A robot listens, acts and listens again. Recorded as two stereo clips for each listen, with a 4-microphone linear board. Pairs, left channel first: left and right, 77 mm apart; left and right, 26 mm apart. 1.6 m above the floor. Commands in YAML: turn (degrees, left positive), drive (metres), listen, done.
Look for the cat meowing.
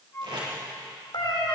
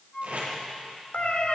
turn: 70
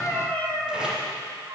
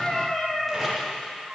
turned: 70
turn: 15
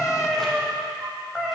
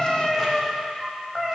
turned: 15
done: "Facing the cat meowing."